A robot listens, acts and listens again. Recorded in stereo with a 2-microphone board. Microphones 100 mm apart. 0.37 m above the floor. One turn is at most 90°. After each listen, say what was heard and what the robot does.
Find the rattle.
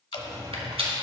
The rattle: about 70° right or 110° right. Turn 70° right.
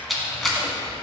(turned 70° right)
Facing the rattle, 1 to 2 m away.